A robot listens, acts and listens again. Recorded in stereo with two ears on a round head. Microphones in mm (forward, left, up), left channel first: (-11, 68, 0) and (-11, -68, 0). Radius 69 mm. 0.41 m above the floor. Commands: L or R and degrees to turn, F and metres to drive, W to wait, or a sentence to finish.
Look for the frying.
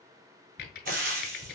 R70
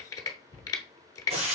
R45
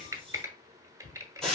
Found it: frying, straight ahead.